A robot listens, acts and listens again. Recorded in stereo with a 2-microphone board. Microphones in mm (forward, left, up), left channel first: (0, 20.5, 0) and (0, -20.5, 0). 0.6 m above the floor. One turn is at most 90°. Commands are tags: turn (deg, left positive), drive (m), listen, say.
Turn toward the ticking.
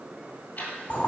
<turn deg="45"/>
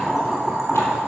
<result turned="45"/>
<listen/>
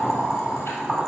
<listen/>
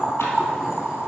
<say>I heard ticking, but can't make it out now. It was about straight ahead or 90° left.</say>